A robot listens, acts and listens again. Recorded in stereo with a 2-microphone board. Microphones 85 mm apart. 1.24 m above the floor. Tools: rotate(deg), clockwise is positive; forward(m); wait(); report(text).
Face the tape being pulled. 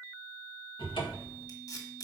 rotate(-50)
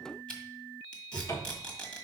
rotate(-10)
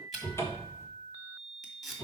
report("Found it: tape being pulled, straight ahead, 1 to 2 m away.")